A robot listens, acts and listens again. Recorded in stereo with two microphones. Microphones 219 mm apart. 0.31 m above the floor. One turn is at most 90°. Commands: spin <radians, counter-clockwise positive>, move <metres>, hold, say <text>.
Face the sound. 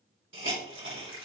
spin -1.13
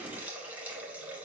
say Facing the hiss, 1 to 2 m away.